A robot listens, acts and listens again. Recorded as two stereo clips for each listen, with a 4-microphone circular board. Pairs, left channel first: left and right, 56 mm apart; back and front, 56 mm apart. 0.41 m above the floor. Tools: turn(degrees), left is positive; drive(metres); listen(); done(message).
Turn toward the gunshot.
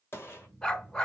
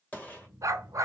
turn(degrees=120)
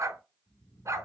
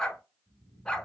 done("Facing where the gunshot came from. I can't hear it now.")